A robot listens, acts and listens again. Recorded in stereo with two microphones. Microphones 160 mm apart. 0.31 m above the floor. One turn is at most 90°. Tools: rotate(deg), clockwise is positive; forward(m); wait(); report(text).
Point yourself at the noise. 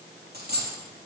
rotate(90)
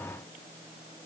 report("I heard a dropped coin from this way, but can't make it out now.")